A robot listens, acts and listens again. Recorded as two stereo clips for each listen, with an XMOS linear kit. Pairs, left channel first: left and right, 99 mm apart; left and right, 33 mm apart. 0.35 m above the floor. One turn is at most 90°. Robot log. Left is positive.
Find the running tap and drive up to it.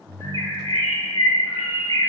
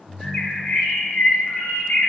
cmd idle
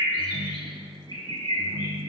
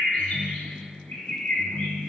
cmd idle
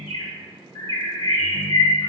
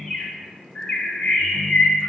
end: I can't make out a running tap to turn to.